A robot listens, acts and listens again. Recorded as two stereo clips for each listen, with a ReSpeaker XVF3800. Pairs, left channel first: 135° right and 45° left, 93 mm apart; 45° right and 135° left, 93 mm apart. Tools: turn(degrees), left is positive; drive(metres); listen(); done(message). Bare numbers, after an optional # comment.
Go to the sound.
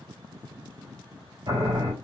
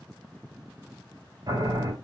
# The boiling: 90° left.
turn(90)
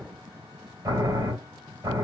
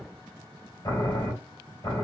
drive(1.0)
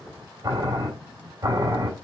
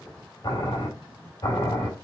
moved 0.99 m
drive(1.0)
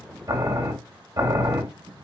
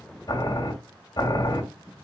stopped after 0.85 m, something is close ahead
done("I am next to the boiling.")